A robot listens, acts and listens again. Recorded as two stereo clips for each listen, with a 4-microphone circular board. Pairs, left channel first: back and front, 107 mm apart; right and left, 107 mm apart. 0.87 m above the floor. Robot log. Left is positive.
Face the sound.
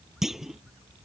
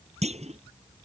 note: The clunk: 85° left.
cmd yaw +85
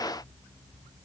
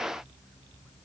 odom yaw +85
end: Facing where the clunk came from. I can't hear it now.